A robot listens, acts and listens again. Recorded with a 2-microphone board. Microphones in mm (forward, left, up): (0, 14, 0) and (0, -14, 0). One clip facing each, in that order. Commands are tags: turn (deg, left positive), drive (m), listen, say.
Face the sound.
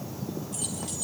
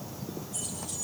<turn deg="90"/>
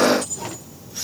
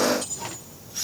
<say>Facing the keys jangling, 2 to 4 m away.</say>